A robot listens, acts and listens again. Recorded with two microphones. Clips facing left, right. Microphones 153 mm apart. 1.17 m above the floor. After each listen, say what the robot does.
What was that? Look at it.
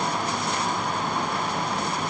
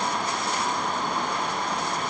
Keep listening.
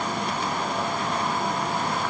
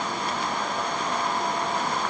Keep listening.
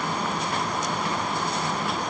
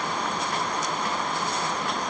I can't make out anything to turn to.